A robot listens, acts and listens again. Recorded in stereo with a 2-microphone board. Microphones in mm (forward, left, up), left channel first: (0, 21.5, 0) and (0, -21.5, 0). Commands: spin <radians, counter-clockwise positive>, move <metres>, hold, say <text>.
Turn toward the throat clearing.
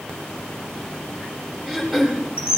spin -0.52
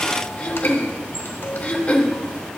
spin 0.35
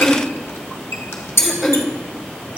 say Facing the throat clearing.